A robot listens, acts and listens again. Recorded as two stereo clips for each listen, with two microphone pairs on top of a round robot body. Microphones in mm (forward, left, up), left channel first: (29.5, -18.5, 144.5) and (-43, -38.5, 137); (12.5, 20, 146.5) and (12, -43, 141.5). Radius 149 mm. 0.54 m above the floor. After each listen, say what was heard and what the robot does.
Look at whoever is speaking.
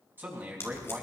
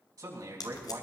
The man speaking: 105° right. Turn 105° right.
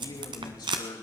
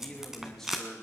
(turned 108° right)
Facing the man speaking.